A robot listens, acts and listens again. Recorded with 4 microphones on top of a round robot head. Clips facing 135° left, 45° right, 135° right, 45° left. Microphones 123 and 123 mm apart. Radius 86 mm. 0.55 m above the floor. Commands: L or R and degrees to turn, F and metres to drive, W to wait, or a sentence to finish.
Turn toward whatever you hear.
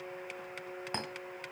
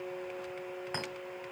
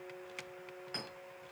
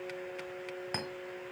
L80
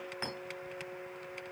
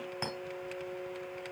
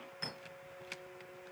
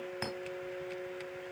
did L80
L20
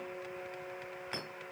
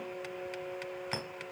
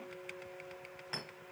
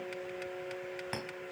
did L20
Facing the clink.